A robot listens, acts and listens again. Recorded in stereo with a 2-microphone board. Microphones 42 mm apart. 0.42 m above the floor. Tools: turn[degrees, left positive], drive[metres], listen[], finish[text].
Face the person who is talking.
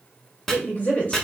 Thought: The woman speaking: about 35° left or 145° left.
Action: turn[35]
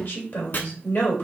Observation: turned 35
Thought: So it is at 105° left.
Action: turn[105]
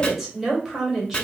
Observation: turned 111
Thought: The woman speaking is now 10° right.
Action: turn[-10]
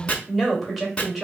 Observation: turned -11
Action: finish[Facing the woman speaking, 1 to 2 m away.]